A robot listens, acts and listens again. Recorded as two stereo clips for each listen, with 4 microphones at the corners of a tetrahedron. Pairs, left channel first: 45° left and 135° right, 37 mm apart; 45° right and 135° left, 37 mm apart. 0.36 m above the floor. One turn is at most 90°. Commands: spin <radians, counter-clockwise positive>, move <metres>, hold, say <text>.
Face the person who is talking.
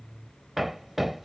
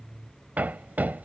hold
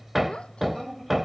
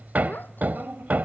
spin -0.35
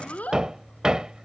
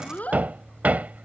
say Found it: a child speaking, straight ahead.